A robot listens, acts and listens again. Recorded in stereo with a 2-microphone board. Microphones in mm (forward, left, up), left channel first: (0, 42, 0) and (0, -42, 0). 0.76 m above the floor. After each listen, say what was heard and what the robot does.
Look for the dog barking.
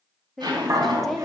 The dog barking: about 35° right or 145° right. Turn 35° right.
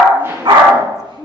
So it is at 100° right. Turn 100° right.
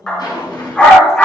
The dog barking is now 15° left. Turn 15° left.
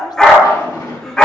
The dog barking is now 10° left. Turn 10° left.
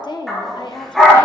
Found it: a dog barking, straight ahead, over 4 m away.